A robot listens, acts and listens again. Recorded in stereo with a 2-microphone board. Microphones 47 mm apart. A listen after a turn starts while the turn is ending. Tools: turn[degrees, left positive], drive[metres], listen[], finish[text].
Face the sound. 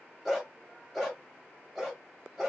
Action: turn[30]
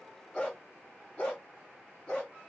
Thought: So it is at 150° left.
Action: turn[150]
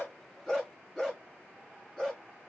Action: finish[Facing the dog barking, over 4 m away.]